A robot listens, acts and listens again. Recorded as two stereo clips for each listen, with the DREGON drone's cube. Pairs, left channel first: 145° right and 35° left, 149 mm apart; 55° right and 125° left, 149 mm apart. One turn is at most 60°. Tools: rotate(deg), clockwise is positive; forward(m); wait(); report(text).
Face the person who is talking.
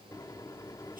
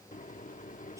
wait()
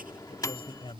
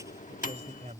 rotate(-60)
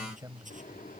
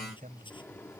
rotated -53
rotate(-60)
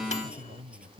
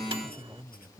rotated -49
rotate(-40)
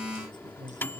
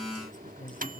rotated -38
report("Found it: a man speaking, straight ahead.")